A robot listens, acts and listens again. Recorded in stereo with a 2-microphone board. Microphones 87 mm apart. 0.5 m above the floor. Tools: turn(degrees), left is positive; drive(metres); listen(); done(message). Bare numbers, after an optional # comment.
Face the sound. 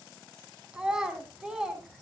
turn(-30)
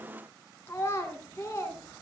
# So it is at 30° left.
turn(30)
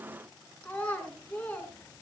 # The child speaking is now 20° left.
turn(20)
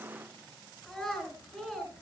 done("Found it: a child speaking, straight ahead.")